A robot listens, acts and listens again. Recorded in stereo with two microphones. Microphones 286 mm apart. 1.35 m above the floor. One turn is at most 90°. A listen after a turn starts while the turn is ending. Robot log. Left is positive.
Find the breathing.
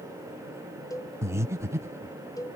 cmd yaw -30
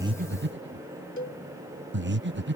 note: So it is at 140° right.
cmd yaw -90
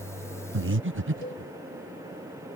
note: The breathing is now 45° right.
cmd yaw -45
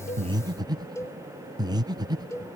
note: The breathing is now 15° right.
cmd yaw -15
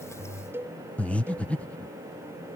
end: Found it: breathing, straight ahead.